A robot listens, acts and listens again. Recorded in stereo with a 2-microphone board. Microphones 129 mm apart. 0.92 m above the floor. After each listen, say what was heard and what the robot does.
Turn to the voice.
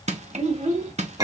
The child speaking: about 65° right or 115° right. Turn 65° right.
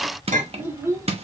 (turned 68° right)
So it is at 25° right. Turn 25° right.
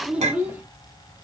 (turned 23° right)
The child speaking is now 15° right. Turn 15° right.
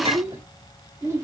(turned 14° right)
The child speaking is now 20° right. Turn 20° right.
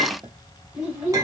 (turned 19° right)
The child speaking is now 10° right. Turn 10° right.
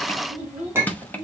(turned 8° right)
Found it: a child speaking, straight ahead, 2 to 4 m away.